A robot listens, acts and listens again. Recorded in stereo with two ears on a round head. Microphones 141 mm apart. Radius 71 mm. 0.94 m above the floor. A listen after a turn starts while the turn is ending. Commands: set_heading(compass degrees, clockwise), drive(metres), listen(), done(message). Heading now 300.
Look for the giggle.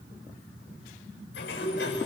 listen()
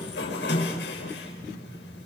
listen()
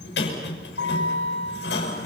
done("I can't make out a giggle to turn to.")